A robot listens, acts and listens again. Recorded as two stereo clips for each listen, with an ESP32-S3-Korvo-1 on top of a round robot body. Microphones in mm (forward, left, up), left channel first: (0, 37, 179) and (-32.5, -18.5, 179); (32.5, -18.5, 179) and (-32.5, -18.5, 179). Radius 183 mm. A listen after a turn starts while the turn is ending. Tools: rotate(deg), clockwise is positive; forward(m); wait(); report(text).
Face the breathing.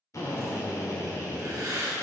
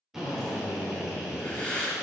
rotate(75)
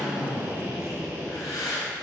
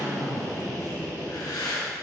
rotate(-15)
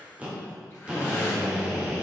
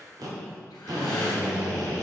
wait()
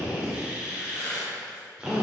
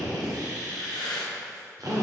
report("Found it: breathing, straight ahead.")